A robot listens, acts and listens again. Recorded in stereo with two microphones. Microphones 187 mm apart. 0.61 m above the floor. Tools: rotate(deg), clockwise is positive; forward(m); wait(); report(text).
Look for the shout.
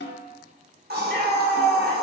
rotate(-30)
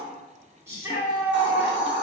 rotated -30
rotate(15)
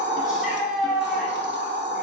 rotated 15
report("Found it: a shout, straight ahead, 1 to 2 m away.")